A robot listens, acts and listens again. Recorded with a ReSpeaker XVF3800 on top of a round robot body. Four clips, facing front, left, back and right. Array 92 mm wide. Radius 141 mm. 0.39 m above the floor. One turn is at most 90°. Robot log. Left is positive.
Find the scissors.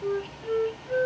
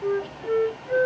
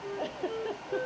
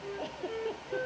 cmd idle
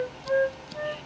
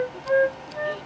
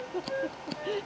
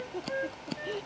note: The scissors: 130° right.
cmd yaw -90
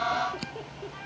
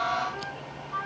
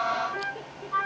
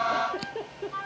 note: Nothing new. It was at 40° right.
cmd yaw -40
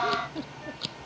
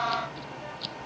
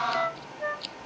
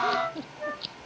end: Facing the scissors.